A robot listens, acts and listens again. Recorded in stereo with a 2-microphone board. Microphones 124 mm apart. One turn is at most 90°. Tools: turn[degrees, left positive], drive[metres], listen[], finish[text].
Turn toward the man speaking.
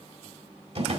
Action: listen[]
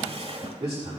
Thought: The man speaking: about 55° right or 125° right.
Action: turn[-55]
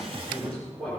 Thought: So it is at 10° left.
Action: turn[10]
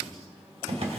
Action: listen[]
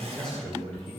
Thought: The man speaking is now 10° left.
Action: turn[10]
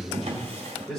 Action: finish[Facing the man speaking, over 4 m away.]